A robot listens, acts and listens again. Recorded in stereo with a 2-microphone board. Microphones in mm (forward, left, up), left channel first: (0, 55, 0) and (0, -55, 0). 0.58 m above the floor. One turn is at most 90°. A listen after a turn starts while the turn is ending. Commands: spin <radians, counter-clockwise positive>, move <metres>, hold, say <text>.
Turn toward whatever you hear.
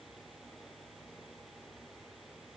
hold
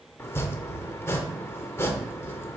spin 0.44
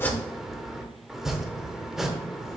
say Found it: chopping, straight ahead, under 1 m away.